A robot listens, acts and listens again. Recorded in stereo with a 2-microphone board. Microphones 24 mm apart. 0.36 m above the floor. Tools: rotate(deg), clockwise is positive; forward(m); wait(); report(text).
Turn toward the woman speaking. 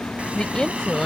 rotate(-30)
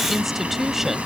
rotate(15)
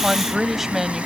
rotate(15)
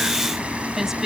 rotate(20)
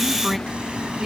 report("Found it: a woman speaking, straight ahead.")